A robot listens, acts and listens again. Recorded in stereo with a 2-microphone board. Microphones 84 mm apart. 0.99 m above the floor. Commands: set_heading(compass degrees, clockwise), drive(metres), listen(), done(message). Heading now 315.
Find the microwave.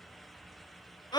listen()
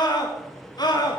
set_heading(285)
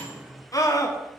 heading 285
set_heading(300)
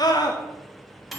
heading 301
done("Found it: a microwave, straight ahead, 1 to 2 m away.")